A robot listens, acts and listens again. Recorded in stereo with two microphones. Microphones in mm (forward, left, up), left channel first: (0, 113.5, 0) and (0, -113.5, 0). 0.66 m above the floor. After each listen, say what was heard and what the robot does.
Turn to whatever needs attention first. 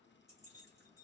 Keep listening.
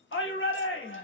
The shout: about 60° left or 120° left. Turn 60° left.
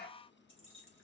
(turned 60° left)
Keep listening.
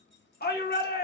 So it is at 50° left. Turn 50° left.
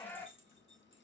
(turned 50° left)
The shout is now 10° left. Turn 10° left.
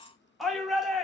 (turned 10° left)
Facing the shout.